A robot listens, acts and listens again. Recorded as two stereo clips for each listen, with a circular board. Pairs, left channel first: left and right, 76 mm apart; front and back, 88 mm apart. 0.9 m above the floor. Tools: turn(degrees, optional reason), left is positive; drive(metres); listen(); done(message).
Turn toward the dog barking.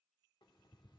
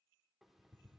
listen()
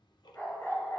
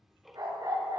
turn(degrees=140, reason="The dog barking: 140° left.")
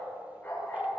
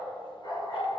turn(degrees=20, reason="The dog barking is now 20° left.")
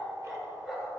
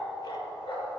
done("Facing the dog barking, over 4 m away.")